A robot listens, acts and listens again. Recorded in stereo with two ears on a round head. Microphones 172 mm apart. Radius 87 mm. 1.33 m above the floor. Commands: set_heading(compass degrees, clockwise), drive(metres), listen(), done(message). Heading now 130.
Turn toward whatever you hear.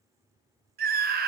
set_heading(180)
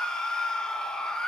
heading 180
done("Facing the scream.")